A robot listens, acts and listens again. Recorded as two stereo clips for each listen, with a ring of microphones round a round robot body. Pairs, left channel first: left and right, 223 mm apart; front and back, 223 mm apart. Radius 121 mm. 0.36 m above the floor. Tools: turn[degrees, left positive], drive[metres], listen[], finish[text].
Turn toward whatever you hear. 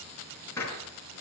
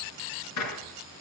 Thought: The gunshot: 10° left.
Action: turn[10]
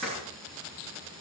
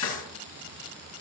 Action: finish[Facing the gunshot.]